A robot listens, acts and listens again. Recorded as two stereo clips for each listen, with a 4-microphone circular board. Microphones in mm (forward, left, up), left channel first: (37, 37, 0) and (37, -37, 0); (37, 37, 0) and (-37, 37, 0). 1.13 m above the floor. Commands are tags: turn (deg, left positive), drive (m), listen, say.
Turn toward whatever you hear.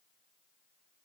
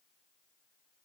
<listen/>
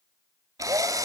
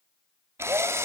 <turn deg="-130"/>
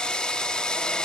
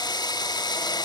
<turn deg="10"/>
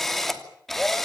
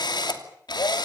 <say>Found it: a drill, straight ahead, 2 to 4 m away.</say>